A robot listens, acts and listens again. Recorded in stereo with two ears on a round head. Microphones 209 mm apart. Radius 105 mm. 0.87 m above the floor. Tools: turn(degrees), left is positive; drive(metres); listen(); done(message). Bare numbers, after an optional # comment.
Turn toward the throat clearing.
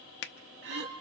# The throat clearing: about 50° right or 130° right.
turn(-50)
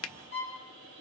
listen()
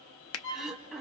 done("Found it: throat clearing, straight ahead, 1 to 2 m away.")